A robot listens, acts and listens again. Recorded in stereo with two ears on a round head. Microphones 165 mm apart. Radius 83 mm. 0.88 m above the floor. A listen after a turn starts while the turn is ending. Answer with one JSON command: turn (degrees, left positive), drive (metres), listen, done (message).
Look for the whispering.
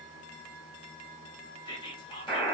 {"turn": 25}
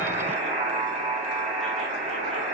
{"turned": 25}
{"listen": true}
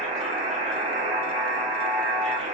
{"listen": true}
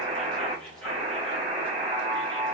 {"done": "I heard whispering, but can't make it out now. It was about straight ahead or 130° left."}